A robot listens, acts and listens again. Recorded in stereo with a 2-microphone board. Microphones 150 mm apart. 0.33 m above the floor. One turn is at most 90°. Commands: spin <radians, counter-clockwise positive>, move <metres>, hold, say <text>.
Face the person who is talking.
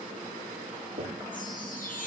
hold
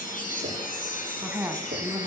spin -0.52
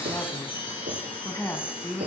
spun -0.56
spin 0.35
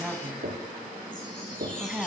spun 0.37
say Facing the woman speaking, 2 to 4 m away.